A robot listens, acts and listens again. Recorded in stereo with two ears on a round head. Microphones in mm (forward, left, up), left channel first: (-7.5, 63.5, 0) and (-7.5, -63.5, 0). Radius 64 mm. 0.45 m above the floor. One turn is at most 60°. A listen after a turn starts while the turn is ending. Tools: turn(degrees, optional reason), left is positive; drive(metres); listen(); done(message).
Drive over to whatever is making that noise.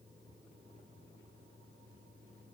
listen()
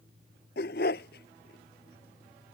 turn(degrees=60)
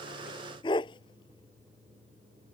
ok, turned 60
turn(degrees=35, reason="So it is at 35° left.")
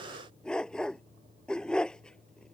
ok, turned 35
drive(metres=1.0)
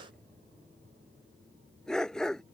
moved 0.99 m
drive(metres=1.0)
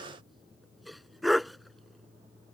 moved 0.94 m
drive(metres=1.0)
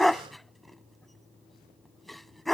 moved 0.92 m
drive(metres=1.0)
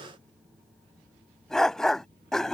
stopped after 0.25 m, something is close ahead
done("Arrived at the dog barking, straight ahead.")